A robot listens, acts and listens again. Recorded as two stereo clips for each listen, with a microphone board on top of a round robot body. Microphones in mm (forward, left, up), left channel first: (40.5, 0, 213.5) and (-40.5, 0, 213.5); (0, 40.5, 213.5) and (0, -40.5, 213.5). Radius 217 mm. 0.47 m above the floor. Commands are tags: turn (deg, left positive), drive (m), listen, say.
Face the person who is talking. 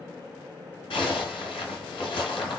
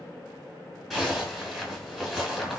<listen/>
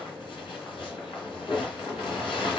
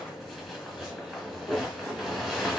<listen/>
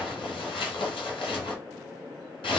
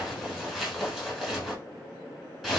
<say>I can't make out anyone speaking, only a zipper.</say>